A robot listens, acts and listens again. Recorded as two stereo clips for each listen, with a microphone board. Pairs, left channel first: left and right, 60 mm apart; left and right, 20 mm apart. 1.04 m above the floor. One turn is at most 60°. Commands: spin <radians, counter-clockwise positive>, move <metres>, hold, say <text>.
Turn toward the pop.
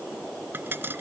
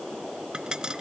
spin -0.70
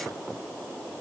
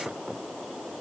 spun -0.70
hold
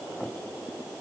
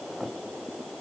say I heard a pop, but can't make it out now. It was about straight ahead or 100° right.